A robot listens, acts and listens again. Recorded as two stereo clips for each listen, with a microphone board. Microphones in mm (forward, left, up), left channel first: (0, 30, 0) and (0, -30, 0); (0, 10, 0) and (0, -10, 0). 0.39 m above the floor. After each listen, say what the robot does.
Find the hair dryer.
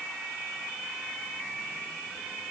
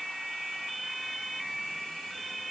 Keep listening.
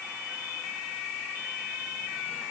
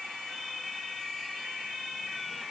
Keep listening.
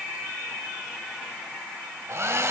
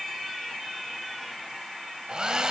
Turn 50° right.
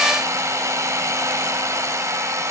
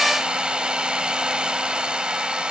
Turn 75° right.
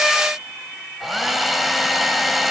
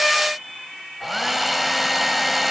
Facing the hair dryer.